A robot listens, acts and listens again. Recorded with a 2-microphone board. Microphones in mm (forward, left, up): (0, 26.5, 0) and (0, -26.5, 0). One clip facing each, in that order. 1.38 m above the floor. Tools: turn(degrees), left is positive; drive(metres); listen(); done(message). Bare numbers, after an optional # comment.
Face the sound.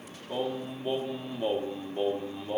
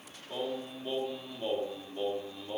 # The singing: about 20° left or 160° left.
turn(20)
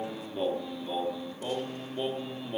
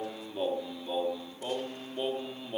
done("Found it: singing, straight ahead, 2 to 4 m away.")